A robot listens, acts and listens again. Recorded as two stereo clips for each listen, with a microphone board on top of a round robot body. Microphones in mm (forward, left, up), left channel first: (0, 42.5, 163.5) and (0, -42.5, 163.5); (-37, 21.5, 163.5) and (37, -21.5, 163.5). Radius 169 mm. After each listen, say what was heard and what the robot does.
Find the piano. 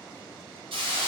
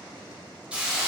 Keep listening.
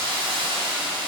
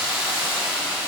Keep listening.
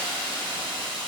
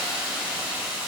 I can't make out a piano to turn to.